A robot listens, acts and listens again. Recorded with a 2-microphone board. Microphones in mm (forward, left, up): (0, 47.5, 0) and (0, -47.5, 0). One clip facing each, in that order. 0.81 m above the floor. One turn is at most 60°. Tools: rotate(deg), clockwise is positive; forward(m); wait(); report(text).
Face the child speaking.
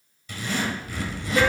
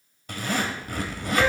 wait()
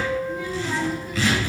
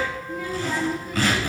rotate(-30)
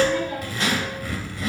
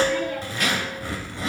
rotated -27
wait()
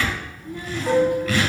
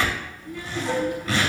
rotate(-60)
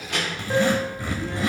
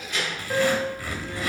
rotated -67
rotate(-60)
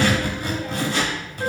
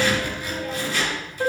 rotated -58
rotate(-30)
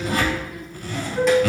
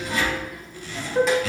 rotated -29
report("Facing the child speaking, 1 to 2 m away.")